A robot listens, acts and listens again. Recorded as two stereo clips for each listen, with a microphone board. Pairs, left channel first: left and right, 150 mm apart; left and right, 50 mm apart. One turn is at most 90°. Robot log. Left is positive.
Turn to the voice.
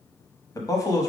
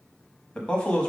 note: The man speaking: about 20° left or 160° left.
cmd yaw +20
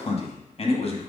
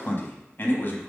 note: So it is at 135° left.
cmd yaw +90
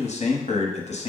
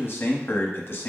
note: The man speaking is now 50° left.
cmd yaw +50
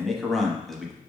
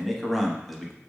end: Found it: a man speaking, straight ahead, under 1 m away.